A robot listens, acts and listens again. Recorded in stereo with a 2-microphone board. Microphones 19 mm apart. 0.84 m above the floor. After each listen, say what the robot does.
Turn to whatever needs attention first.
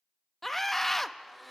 Turn 30° left.
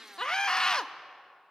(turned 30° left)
Turn 140° left.
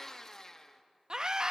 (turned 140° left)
Turn 40° right.
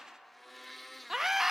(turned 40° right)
Turn 15° right.
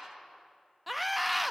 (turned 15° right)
Found it: a scream, straight ahead, under 1 m away.